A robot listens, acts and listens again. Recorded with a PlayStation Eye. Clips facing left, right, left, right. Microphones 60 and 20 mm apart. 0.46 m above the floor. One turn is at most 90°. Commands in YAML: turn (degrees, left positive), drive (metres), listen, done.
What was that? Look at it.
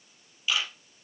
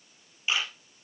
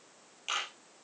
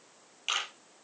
turn: -30
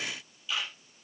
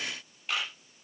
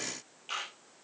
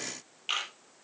turn: -90
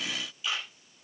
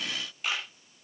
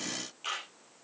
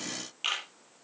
turn: -60
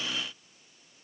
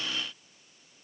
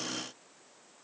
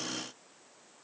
listen: true
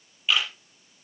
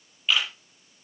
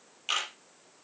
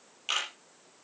done: "Found it: a camera shutter, straight ahead."